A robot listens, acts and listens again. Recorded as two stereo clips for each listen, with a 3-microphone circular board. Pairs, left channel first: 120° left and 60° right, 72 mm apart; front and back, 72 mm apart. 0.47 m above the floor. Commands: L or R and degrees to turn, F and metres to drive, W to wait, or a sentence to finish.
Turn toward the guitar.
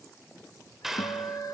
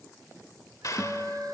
L80
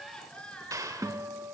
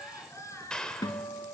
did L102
R20
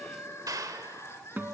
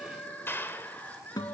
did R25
Facing the guitar.